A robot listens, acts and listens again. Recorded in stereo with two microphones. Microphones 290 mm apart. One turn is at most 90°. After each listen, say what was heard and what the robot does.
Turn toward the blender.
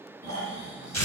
Keep listening.
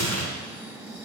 Keep listening.
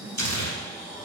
I can't make out a blender to turn to.